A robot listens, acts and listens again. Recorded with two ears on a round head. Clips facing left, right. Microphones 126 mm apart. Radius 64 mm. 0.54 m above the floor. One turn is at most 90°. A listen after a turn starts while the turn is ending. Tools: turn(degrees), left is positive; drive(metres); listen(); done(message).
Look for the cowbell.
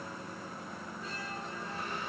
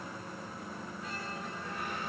listen()
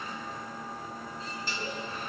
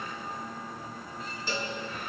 turn(degrees=-70)
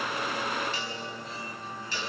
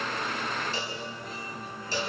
turn(degrees=-30)
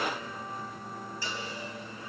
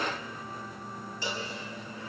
turn(degrees=-20)
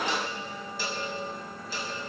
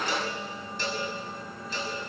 done("Found it: a cowbell, straight ahead.")